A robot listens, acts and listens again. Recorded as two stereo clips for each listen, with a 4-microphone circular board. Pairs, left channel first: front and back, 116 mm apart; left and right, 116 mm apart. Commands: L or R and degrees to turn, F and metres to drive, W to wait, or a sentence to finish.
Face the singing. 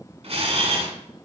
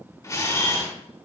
W
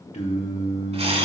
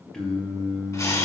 Found it: singing, straight ahead, 1 to 2 m away.